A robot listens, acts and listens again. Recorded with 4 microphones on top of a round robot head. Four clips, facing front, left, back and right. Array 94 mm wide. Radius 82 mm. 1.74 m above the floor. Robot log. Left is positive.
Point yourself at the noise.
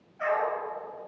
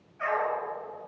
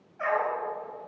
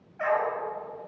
note: The dog barking: 105° right.
cmd yaw -105
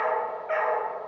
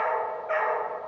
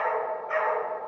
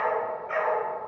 note: The dog barking is now 40° left.
cmd yaw +40
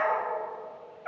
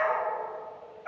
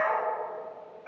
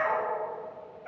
note: The dog barking is now 25° left.
cmd yaw +25
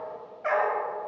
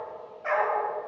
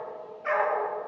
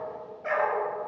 end: Found it: a dog barking, straight ahead.